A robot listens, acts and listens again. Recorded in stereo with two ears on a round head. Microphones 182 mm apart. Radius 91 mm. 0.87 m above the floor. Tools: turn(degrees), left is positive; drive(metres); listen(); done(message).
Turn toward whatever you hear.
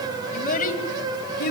turn(degrees=50)
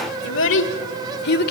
turn(degrees=50)
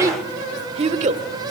turn(degrees=-40)
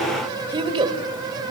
turn(degrees=-25)
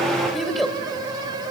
done("Found it: a child speaking, straight ahead.")